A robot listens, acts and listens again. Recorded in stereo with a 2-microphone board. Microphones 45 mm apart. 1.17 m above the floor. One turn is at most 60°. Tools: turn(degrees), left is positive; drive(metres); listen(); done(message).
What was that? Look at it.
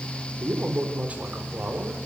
turn(degrees=-35)
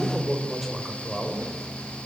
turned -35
done("Found it: a man speaking, straight ahead, over 4 m away.")